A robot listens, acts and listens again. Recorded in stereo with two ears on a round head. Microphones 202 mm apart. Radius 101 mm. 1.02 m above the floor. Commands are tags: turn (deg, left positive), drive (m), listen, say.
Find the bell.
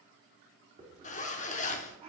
<listen/>
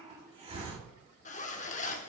<listen/>
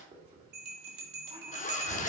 <turn deg="-45"/>
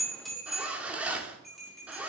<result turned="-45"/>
<say>Found it: a bell, straight ahead, 2 to 4 m away.</say>